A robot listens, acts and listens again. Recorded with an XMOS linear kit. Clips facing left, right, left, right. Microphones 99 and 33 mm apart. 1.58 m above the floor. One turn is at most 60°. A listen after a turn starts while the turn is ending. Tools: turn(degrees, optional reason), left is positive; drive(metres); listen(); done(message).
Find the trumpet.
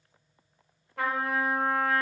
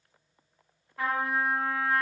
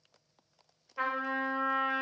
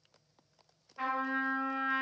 turn(degrees=60, reason="The trumpet: about 70° left or 110° left.")
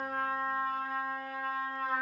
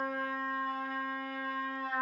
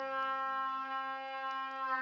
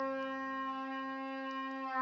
turn(degrees=45, reason="So it is at 45° left.")
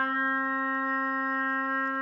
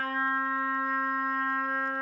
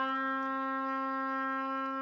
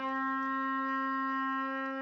done("Facing the trumpet, 1 to 2 m away.")